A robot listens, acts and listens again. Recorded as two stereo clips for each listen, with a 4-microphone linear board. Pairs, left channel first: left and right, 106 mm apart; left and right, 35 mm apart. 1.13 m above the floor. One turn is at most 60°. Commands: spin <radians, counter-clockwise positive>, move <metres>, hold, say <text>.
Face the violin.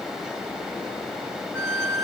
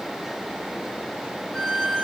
spin -0.52
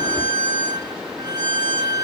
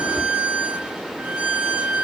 spin -1.05
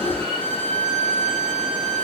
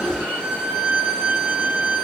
spin -1.05
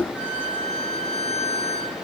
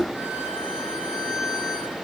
spin 0.26
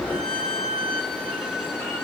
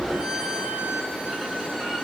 say Found it: a violin, straight ahead, 2 to 4 m away.